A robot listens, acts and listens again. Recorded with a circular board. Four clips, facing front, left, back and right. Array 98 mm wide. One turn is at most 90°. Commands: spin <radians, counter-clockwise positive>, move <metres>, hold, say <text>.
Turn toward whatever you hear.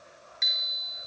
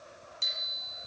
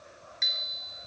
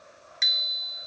spin -1.57
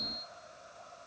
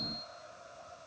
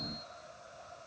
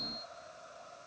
spin -0.17
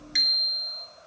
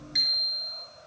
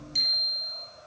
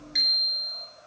say Facing the bicycle bell, 2 to 4 m away.